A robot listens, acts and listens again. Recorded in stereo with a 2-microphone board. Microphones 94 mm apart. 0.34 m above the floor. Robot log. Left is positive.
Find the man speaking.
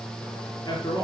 note: The man speaking: about 45° left or 135° left.
cmd yaw +45
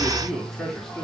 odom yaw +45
end: Facing the man speaking.